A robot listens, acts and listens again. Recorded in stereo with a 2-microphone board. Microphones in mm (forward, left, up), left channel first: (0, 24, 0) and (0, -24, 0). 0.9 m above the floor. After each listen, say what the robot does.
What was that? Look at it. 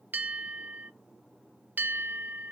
Turn 35° right.
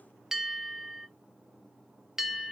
Turn 10° right.
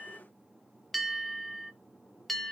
Found it: a bell, straight ahead, under 1 m away.